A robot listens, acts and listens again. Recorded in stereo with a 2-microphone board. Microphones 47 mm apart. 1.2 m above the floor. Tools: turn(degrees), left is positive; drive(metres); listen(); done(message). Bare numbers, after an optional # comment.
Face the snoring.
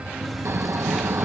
# The snoring: about 65° right or 115° right.
turn(-65)
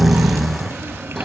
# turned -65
done("Facing the snoring.")